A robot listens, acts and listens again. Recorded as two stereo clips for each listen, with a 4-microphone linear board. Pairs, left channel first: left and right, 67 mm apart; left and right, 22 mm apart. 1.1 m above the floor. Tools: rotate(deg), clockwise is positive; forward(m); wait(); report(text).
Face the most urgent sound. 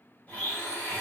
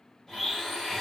wait()
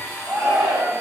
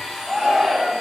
rotate(20)
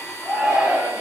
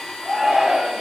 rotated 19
report("Facing the shout.")